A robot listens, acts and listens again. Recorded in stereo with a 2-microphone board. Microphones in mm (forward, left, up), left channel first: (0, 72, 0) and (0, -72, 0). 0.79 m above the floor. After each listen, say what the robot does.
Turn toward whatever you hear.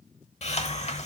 Turn 50° left.
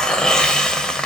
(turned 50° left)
Facing the hiss.